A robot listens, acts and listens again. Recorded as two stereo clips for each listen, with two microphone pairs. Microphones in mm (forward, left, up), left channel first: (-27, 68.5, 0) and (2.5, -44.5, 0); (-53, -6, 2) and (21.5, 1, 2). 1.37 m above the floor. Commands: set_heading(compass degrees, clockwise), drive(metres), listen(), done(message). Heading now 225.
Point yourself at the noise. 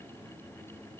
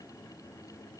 listen()
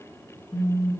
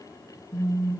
set_heading(85)
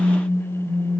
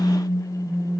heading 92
done("Facing the phone buzzing, 2 to 4 m away.")